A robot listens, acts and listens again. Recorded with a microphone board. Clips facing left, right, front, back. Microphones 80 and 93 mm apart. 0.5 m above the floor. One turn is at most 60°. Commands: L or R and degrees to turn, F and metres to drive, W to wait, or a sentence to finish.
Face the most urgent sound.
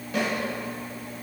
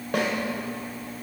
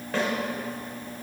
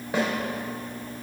W
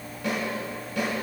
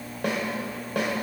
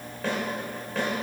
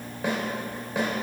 W
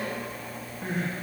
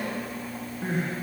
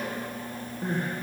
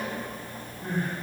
R15
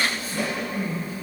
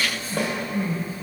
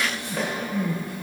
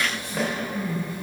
Facing the crying.